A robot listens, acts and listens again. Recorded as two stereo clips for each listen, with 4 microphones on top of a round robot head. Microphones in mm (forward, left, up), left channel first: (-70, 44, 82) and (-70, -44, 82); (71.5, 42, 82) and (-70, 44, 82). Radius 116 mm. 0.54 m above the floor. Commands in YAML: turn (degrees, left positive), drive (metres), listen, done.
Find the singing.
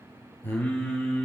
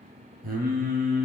turn: 155
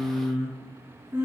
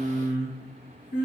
turn: -25
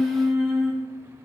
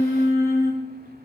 turn: -10
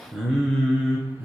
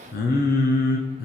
turn: -10
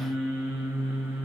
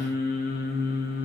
turn: -10
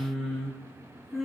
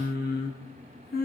done: "Facing the singing."